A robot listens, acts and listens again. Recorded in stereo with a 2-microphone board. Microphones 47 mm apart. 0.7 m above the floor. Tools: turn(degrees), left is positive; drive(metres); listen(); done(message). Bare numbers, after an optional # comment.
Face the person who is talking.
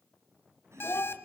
# The child speaking: about 65° left or 115° left.
turn(65)
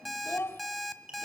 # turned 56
# So it is at 60° left.
turn(60)
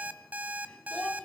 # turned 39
# The child speaking is now 20° left.
turn(20)
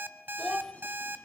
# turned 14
done("Facing the child speaking, 1 to 2 m away.")